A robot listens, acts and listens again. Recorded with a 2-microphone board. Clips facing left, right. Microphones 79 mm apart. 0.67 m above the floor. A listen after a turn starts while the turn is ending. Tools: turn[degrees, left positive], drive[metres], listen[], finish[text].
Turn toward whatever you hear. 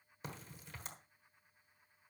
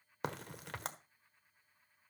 Thought: The crack: about 70° right or 110° right.
Action: turn[-70]
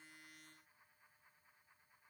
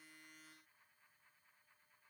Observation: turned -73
Action: listen[]
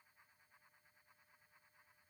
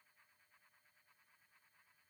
Action: finish[I heard a crack, but can't make it out now. It was about 5° left or 40° right.]